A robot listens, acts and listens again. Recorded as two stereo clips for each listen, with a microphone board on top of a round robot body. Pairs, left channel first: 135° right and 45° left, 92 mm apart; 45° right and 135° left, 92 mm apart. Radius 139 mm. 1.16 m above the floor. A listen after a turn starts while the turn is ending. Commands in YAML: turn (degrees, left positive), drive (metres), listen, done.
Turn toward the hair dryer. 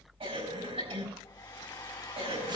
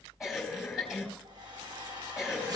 turn: 180
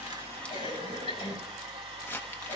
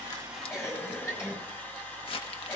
turn: 25
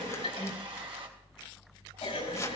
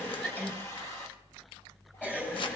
turn: 15
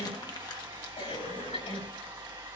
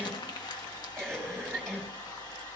done: "Facing the hair dryer, 2 to 4 m away."